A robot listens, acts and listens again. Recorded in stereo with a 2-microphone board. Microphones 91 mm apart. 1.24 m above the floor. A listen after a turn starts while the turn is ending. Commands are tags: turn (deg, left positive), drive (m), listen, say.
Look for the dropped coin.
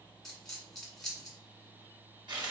<turn deg="30"/>
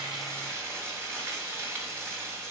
<listen/>
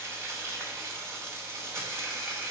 <say>I heard a dropped coin, but can't make it out now. It was about 30° right or 150° left.</say>